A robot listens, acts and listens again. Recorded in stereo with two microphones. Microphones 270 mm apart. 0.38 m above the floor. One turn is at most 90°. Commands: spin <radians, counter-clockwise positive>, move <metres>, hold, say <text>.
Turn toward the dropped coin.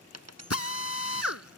spin -1.22
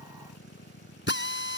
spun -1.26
hold
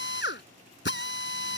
say I heard a dropped coin, but can't make it out now. It was about 5° left or 40° right.